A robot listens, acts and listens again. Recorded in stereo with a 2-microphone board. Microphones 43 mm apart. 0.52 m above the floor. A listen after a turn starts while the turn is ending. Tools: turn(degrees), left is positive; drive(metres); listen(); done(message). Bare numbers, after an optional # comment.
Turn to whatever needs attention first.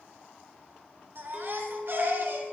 # The baby crying: about 55° right or 125° right.
turn(-55)
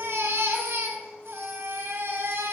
# So it is at 75° right.
turn(-75)
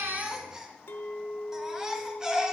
# The baby crying is now 15° right.
turn(-15)
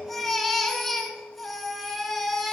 done("Facing the baby crying.")